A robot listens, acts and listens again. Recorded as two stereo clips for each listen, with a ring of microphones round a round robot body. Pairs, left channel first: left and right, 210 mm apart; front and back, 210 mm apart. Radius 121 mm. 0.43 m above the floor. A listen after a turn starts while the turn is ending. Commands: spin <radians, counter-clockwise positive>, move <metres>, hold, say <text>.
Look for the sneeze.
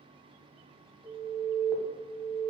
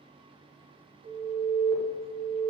hold
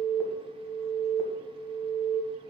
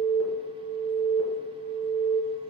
hold
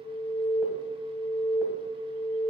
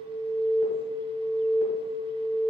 say I can't make out a sneeze to turn to.